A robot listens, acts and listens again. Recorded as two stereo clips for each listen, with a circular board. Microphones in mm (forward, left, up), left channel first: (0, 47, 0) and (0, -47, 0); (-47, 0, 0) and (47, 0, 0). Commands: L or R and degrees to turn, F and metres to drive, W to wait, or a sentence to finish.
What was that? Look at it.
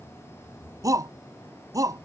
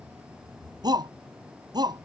R40
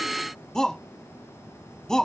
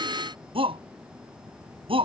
Facing the shout.